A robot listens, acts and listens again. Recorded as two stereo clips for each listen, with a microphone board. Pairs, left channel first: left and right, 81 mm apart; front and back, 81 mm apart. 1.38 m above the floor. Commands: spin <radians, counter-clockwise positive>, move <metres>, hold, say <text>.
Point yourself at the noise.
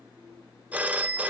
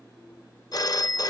spin -0.44
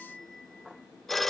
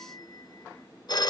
say Found it: a phone ringing, straight ahead, under 1 m away.